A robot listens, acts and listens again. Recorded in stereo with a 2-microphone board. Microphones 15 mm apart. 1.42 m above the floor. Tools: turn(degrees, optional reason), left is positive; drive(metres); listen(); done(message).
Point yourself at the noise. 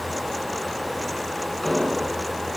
turn(degrees=60, reason="The explosion: about 60° left or 120° left.")
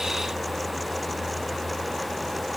listen()
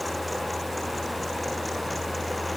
done("I heard an explosion, but can't make it out now. It was about straight ahead or 60° left.")